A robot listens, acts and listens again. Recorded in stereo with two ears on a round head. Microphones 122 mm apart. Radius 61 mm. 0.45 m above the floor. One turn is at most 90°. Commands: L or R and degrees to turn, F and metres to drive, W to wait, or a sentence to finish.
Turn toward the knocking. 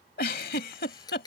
W
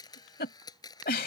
W
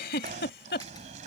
R55
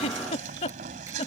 R65
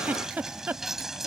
Facing the knocking.